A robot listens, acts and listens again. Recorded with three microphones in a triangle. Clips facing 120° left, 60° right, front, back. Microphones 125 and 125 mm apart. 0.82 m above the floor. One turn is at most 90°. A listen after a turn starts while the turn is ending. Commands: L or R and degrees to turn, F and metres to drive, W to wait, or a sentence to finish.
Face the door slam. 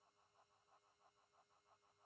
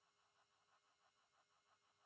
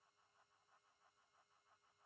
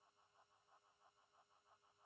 W
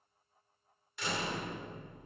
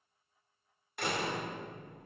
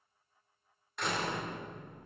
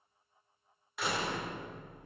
R90
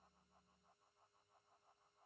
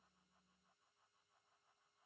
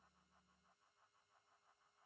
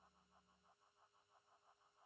I heard a door slam from this way, but can't make it out now.